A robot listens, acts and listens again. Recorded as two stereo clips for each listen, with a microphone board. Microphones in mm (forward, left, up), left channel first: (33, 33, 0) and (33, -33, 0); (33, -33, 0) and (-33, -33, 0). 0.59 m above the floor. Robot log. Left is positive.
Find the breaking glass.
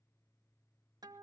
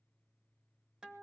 cmd idle
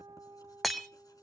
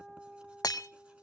end: Facing the breaking glass.